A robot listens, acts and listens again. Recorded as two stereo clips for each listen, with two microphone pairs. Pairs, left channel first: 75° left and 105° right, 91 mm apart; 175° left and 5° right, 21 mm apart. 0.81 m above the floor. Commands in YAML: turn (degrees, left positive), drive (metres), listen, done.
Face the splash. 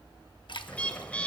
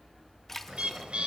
turn: 105
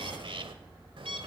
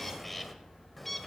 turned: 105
done: "I heard a splash from this way, but can't make it out now."